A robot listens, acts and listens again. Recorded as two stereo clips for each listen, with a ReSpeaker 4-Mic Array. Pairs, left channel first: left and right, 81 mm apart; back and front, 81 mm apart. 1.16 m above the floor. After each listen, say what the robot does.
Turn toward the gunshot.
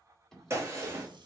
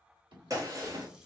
Turn 40° right.
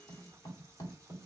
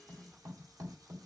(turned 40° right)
Facing where the gunshot came from. I can't hear it now.